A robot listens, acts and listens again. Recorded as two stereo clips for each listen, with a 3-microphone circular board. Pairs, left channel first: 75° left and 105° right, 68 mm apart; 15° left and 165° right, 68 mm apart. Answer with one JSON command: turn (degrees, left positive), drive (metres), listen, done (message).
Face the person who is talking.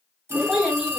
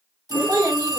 {"turn": 170}
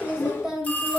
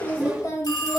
{"turn": -25}
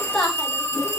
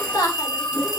{"turn": -10}
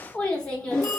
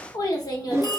{"done": "Found it: a child speaking, straight ahead."}